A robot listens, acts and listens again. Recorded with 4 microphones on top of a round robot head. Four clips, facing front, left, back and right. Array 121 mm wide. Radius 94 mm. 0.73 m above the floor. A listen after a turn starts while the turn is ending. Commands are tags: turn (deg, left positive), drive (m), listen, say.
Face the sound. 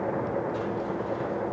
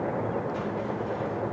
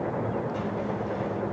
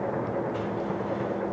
<listen/>
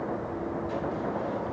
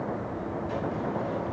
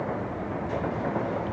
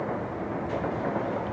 <listen/>
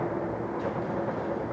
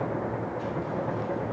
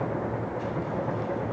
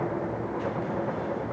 <say>I can't make out anything.</say>